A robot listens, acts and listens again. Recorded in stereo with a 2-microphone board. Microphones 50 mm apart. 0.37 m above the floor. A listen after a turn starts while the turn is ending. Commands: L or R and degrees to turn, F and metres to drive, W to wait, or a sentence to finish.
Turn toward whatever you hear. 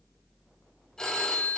L30
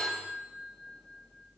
R15
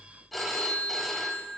Found it: a phone ringing, straight ahead.